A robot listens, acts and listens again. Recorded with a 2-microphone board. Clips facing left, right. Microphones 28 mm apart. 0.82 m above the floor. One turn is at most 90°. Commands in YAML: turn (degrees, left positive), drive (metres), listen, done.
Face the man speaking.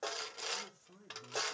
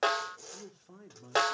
turn: -45
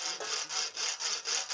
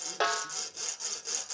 listen: true
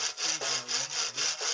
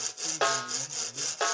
listen: true
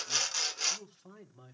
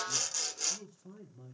turn: 50
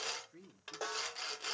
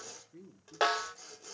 turn: 10
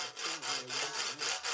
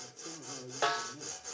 done: "Found it: a man speaking, straight ahead."